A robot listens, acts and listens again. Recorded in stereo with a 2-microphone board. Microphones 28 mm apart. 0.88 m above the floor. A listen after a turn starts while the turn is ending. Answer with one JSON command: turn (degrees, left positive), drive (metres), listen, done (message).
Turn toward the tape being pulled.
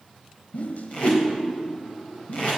{"turn": 50}
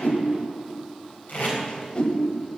{"turn": 80}
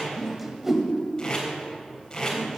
{"turn": 25}
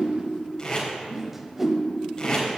{"turn": 25}
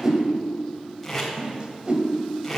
{"done": "Found it: tape being pulled, straight ahead."}